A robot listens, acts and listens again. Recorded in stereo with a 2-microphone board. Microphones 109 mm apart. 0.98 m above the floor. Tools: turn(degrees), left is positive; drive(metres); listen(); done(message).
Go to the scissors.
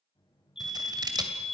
turn(degrees=-40)
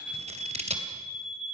turn(degrees=-100)
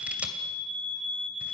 turn(degrees=-10)
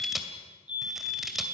drive(metres=1.0)
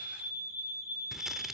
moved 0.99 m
drive(metres=1.0)
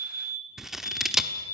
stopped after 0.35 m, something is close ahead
done("Arrived at the scissors, straight ahead.")